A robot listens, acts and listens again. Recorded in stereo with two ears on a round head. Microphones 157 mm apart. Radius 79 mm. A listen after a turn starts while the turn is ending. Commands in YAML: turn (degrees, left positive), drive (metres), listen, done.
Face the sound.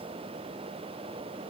listen: true
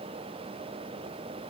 listen: true
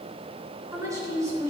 turn: -20
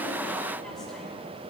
listen: true
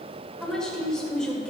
done: "Facing the woman speaking, 2 to 4 m away."